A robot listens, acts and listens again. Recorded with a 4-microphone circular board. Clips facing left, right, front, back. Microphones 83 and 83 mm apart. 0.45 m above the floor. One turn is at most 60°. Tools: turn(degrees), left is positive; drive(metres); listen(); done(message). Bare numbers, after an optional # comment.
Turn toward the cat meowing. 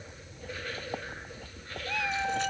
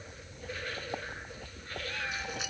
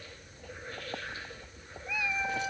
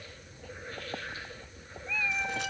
# The cat meowing: 80° left.
turn(60)
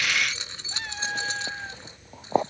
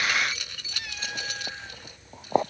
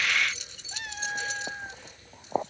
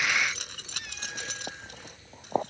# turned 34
# The cat meowing is now 40° left.
turn(40)
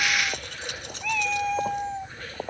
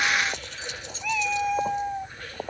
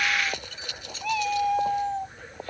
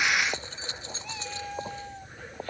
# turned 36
# The cat meowing is now 10° right.
turn(-10)
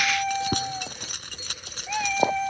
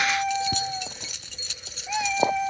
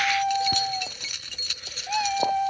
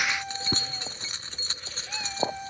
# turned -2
done("Facing the cat meowing.")